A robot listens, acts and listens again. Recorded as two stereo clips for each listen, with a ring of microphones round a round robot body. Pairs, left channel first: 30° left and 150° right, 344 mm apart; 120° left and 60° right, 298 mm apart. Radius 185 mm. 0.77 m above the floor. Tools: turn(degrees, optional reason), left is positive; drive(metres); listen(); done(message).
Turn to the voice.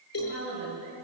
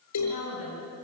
turn(degrees=155, reason="The woman speaking: 155° left.")
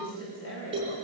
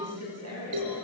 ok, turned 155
turn(degrees=-25, reason="The woman speaking is now 25° right.")
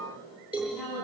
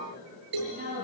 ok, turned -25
done("Facing the woman speaking, over 4 m away.")